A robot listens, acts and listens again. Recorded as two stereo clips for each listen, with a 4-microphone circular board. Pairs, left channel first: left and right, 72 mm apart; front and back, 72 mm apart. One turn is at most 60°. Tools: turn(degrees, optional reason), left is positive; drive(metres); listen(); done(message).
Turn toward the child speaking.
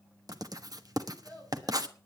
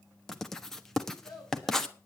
turn(degrees=20, reason="The child speaking: 20° left.")
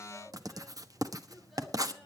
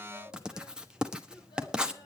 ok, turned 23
done("Facing the child speaking, over 4 m away.")